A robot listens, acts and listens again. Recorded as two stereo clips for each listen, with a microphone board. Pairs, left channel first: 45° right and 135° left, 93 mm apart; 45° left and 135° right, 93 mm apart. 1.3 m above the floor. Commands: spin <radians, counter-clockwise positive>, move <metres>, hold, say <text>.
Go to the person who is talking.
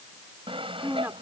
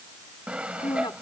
spin 1.13
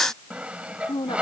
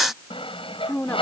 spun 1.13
spin -0.44
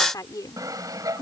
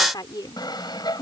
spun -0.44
move 1.0
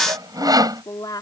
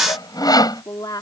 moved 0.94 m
move 1.0
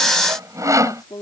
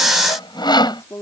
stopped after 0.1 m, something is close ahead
spin -0.17
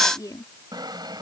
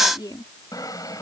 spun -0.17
say Something is in my way. I am facing the woman speaking but have not reached it.